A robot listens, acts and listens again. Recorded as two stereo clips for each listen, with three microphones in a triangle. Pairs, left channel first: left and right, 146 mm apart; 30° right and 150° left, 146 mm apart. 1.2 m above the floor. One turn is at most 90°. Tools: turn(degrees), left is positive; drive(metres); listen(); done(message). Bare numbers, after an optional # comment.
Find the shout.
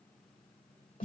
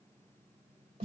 listen()
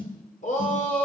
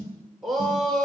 # The shout: 60° left.
turn(60)
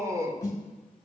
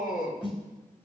# The shout is now 20° right.
turn(-20)
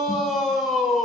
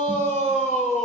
done("Facing the shout, 2 to 4 m away.")